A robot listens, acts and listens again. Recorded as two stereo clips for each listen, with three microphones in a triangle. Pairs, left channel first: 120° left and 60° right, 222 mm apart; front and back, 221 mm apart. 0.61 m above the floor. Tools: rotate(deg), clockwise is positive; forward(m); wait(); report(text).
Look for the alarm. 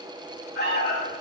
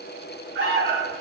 rotate(-155)
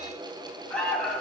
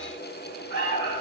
rotate(-35)
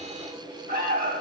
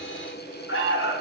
rotate(15)
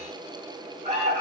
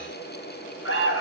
report("Facing the alarm, 2 to 4 m away.")